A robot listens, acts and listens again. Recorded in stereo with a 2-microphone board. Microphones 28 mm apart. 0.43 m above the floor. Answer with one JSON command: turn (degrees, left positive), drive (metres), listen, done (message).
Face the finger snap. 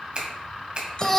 {"turn": -40}
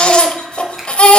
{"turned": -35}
{"listen": true}
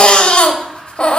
{"listen": true}
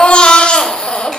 {"done": "I heard a finger snap, but can't make it out now. It was about 5° right or 105° right."}